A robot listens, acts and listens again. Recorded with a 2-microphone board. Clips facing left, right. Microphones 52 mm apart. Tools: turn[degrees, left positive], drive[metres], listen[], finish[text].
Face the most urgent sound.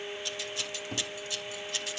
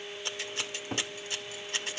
Action: listen[]
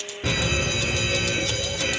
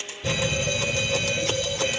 Thought: The fire alarm: about 65° left or 115° left.
Action: turn[65]
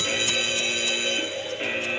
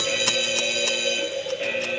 Thought: So it is at 30° left.
Action: turn[30]
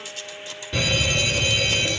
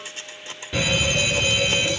Thought: The fire alarm is now 10° right.
Action: turn[-10]
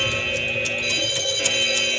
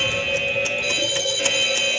Action: finish[Found it: a fire alarm, straight ahead, 2 to 4 m away.]